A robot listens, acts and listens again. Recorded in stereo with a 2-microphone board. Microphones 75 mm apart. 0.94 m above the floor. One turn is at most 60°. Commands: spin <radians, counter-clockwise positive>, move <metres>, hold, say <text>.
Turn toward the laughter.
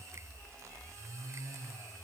hold
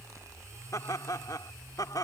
spin 1.05
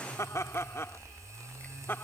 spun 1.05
spin 0.52
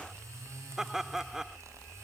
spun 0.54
say Facing the laughter.